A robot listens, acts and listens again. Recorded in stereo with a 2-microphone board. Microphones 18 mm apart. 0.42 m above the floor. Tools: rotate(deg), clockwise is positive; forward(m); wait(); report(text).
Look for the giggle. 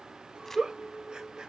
rotate(50)
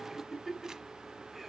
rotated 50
report("Facing the giggle, 2 to 4 m away.")